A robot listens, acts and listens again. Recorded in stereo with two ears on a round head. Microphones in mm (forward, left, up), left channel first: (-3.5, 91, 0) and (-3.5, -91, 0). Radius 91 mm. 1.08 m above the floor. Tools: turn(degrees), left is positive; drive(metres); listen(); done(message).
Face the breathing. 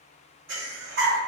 turn(degrees=-60)
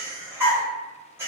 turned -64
turn(degrees=-10)
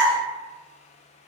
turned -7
done("Facing the breathing, 1 to 2 m away.")